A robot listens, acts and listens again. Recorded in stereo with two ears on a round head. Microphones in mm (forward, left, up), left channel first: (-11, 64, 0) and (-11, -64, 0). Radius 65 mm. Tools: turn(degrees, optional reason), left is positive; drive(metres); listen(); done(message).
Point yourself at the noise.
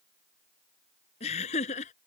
turn(degrees=50, reason="The laughter: about 50° left or 130° left.")
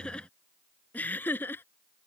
turn(degrees=15, reason="So it is at 15° left.")
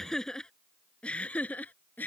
turn(degrees=15, reason="The laughter is now 15° left.")
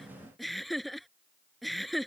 done("Found it: laughter, straight ahead.")